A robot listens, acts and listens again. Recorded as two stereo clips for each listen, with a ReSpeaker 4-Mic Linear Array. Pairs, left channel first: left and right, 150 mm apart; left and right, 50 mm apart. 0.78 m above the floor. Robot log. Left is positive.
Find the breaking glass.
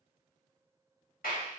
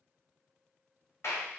cmd idle
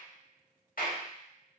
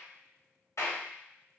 cmd idle
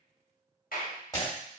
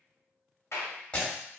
note: The breaking glass: about 25° left or 155° left.
cmd yaw +25
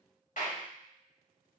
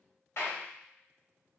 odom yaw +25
cmd idle
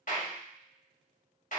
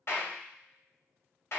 end: I heard breaking glass, but can't make it out now. It was about straight ahead or 130° left.